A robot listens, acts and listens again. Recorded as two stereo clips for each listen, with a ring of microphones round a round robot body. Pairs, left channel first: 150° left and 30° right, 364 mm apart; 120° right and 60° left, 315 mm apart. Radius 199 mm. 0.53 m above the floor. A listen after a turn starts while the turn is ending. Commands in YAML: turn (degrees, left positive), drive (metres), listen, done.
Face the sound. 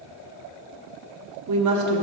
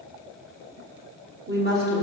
done: "Facing the woman speaking, 1 to 2 m away."